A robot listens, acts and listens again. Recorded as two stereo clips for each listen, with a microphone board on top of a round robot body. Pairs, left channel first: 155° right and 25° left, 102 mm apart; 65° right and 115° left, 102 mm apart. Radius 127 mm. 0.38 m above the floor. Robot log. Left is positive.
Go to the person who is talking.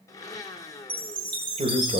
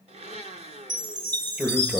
note: The man speaking: 35° left.
cmd yaw +35
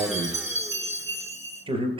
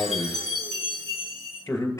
cmd fwd 1.0
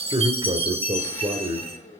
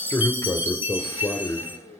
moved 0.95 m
note: The man speaking is now 10° right.
cmd yaw -10
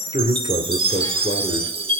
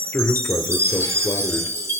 cmd fwd 1.0
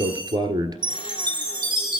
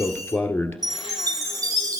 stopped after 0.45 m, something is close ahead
end: I am next to the man speaking.